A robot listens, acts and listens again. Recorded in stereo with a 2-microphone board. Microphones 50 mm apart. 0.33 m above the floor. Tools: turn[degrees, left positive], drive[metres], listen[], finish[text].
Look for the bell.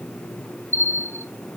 Thought: The bell: about 60° right or 120° right.
Action: turn[-60]
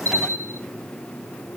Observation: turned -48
Thought: So it is at 75° right.
Action: turn[-75]
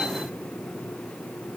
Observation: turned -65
Thought: Nothing new. It was at 10° right.
Action: turn[-10]
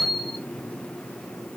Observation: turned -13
Action: finish[Facing the bell.]